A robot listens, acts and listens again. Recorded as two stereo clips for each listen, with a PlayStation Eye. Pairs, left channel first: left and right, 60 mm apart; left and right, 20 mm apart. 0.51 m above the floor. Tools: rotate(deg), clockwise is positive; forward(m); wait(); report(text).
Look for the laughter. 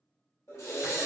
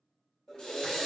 rotate(-55)
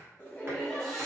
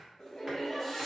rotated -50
report("Found it: laughter, straight ahead.")